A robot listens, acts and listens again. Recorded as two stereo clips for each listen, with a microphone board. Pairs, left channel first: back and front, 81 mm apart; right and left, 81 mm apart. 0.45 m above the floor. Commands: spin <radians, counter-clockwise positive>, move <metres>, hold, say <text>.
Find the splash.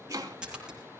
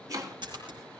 spin 1.40
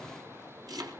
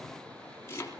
say Facing where the splash came from. I can't hear it now.